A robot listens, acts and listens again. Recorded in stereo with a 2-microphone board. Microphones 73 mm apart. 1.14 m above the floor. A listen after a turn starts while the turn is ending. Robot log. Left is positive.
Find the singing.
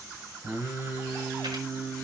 note: The singing: about 30° right or 150° right.
cmd yaw -30
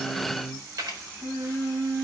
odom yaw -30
note: So it is at 120° right.
cmd yaw -120
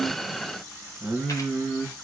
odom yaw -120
end: Facing the singing.